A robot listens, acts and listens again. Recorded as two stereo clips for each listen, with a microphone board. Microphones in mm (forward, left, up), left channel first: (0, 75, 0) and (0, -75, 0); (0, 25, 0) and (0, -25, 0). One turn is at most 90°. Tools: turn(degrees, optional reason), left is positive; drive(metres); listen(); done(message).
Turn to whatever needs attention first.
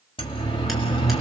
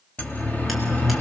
turn(degrees=35, reason="The siren: about 35° left or 145° left.")
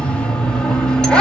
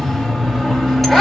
done("Found it: a siren, straight ahead.")